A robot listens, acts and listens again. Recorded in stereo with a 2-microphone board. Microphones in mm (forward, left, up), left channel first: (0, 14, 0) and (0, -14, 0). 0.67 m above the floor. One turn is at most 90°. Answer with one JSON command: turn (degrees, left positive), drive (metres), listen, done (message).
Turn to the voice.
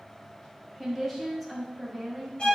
{"turn": 30}
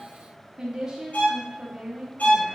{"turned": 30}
{"turn": -20}
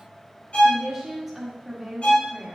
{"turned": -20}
{"done": "Found it: a woman speaking, straight ahead."}